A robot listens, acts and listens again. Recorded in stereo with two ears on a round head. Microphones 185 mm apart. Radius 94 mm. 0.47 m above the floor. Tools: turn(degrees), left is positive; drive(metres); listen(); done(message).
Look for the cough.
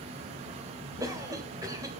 turn(degrees=-15)
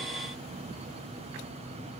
listen()
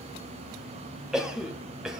done("Facing the cough.")